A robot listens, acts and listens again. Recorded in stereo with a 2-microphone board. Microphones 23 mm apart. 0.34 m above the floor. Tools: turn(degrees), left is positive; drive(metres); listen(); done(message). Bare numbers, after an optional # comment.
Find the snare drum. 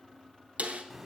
# The snare drum: about 75° right or 105° right.
turn(-75)
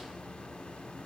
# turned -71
listen()
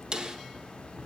# So it is at 35° right.
turn(-35)
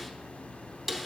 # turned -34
done("Found it: a snare drum, straight ahead, under 1 m away.")